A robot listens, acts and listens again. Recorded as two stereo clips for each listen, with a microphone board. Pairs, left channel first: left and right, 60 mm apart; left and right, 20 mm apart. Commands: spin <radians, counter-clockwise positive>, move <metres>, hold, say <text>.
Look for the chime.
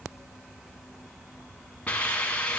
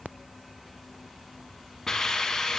hold
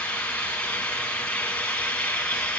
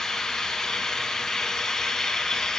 hold
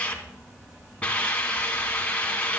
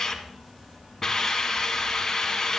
say I can't make out a chime, only a hiss.